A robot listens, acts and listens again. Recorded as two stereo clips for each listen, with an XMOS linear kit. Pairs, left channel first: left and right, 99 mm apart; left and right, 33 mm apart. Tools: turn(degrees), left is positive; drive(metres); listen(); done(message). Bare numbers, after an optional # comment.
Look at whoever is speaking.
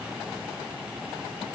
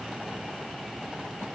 listen()
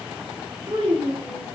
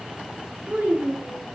turn(-90)
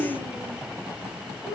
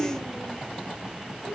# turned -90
done("Facing the child speaking.")